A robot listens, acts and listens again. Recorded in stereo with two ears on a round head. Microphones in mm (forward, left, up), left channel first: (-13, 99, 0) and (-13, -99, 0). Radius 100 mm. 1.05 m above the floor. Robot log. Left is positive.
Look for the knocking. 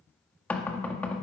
cmd yaw +30
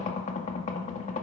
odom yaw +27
note: So it is at 145° left.
cmd yaw +145
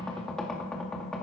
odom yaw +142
end: Found it: knocking, straight ahead.